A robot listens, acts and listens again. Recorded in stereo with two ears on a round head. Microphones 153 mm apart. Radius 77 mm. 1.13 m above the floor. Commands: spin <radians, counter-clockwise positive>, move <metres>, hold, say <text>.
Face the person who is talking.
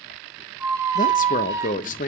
spin 0.79
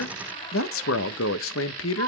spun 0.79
spin 1.48
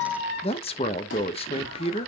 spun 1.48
spin 0.52
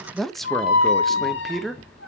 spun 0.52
say Facing the man speaking, under 1 m away.